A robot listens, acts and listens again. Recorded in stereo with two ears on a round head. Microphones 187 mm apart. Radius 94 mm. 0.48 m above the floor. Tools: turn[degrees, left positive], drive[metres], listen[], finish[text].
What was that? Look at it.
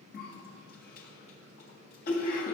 Thought: The cough: about 45° left or 135° left.
Action: turn[45]
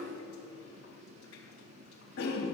Thought: So it is at 85° left.
Action: turn[85]
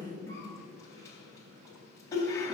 Thought: The cough is now 15° left.
Action: turn[15]
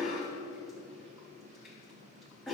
Action: finish[Found it: a cough, straight ahead.]